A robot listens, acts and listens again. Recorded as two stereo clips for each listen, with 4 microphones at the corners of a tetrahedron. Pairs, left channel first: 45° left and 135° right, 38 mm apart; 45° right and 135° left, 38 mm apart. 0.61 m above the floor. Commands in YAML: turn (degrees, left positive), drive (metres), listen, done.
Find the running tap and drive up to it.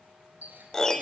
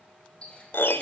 turn: -105
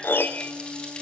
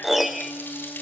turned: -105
listen: true
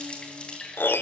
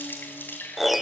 turn: -20
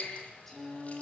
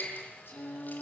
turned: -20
drive: 1.0
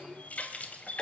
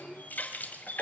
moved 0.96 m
drive: 1.0
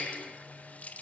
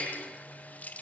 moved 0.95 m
drive: 1.0
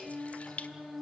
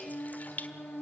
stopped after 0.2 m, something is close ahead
done: "I am next to the running tap."